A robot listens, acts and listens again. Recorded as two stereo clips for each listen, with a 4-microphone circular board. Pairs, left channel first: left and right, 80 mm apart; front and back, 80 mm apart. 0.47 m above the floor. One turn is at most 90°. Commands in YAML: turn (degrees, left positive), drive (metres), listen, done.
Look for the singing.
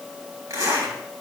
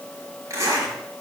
listen: true
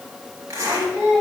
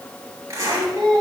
turn: -90
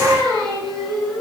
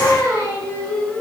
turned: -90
turn: -50
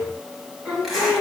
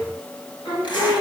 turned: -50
turn: -10
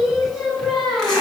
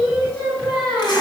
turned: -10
done: "Found it: singing, straight ahead, over 4 m away."